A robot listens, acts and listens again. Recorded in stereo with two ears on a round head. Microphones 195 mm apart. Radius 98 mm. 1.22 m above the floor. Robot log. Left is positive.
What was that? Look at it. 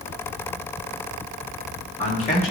note: The man speaking: about 30° left or 150° left.
cmd yaw +30
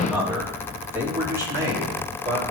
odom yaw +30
note: So it is at 20° right.
cmd yaw -20
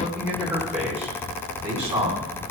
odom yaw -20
note: The man speaking is now 10° right.
cmd yaw -10
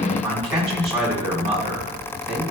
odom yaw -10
end: Found it: a man speaking, straight ahead.